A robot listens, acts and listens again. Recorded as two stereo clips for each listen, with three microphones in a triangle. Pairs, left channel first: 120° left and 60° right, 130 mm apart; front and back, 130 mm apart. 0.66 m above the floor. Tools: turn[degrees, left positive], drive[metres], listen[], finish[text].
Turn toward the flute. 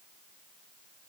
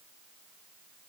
Action: listen[]
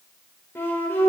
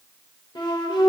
Thought: The flute: 50° left.
Action: turn[50]
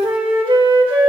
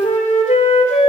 Thought: The flute is now 15° right.
Action: turn[-15]
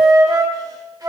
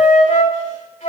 Action: finish[Facing the flute.]